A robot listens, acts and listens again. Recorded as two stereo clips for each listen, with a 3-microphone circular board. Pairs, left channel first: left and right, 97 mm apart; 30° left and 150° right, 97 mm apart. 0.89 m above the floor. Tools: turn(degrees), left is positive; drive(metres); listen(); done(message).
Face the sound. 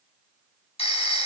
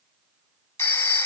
turn(degrees=95)
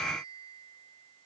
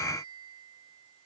listen()
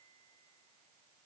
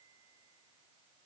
listen()
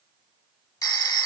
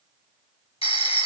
turn(degrees=40)
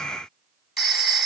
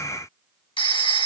done("Found it: a phone ringing, straight ahead, under 1 m away.")